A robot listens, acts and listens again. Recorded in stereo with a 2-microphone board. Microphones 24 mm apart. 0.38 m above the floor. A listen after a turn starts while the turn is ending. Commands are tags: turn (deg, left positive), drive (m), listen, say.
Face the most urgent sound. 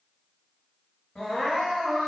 <turn deg="45"/>
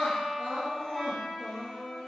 <turn deg="95"/>
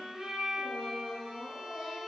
<say>Found it: crying, straight ahead.</say>